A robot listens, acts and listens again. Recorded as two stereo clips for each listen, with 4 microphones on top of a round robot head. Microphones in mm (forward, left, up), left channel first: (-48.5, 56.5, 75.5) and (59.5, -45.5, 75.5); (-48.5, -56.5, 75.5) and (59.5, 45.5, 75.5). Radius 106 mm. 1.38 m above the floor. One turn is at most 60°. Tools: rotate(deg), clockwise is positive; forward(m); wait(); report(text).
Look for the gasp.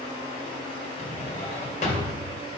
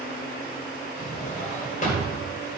wait()
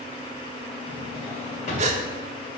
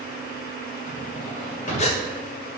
rotate(60)
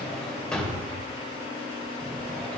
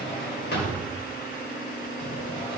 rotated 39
rotate(50)
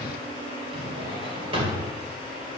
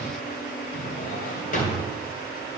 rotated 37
rotate(15)
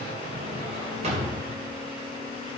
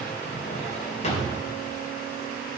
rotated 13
report("Facing where the gasp came from. I can't hear it now.")